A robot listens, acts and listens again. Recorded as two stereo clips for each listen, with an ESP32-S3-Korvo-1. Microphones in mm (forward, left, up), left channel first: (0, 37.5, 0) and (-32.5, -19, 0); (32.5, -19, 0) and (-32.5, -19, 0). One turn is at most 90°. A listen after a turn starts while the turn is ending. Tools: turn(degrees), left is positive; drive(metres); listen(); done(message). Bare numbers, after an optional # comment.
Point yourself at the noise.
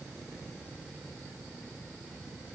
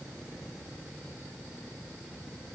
listen()
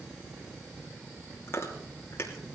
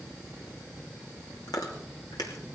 # The chewing: 10° left.
turn(10)
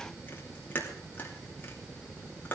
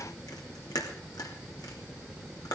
done("Found it: chewing, straight ahead.")